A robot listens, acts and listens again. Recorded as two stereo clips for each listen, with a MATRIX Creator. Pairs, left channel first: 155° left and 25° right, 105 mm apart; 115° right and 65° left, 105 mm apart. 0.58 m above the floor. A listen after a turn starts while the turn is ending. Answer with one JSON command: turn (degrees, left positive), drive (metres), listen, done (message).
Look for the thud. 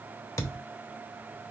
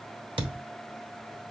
{"turn": 100}
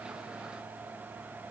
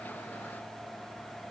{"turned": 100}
{"done": "Facing where the thud came from. I can't hear it now."}